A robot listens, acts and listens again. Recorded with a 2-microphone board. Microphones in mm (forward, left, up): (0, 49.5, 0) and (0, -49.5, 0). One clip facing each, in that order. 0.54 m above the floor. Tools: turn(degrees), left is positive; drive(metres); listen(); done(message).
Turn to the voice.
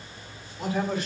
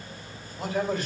turn(degrees=-45)
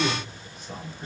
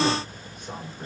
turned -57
turn(degrees=-55)
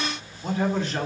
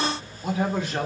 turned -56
done("Found it: a man speaking, straight ahead.")